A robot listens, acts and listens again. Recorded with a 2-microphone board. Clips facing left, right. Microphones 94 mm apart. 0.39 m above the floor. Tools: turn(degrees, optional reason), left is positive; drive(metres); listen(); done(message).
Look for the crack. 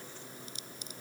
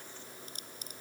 turn(degrees=-50, reason="The crack: about 50° right or 130° right.")
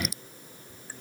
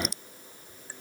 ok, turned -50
done("Facing the crack.")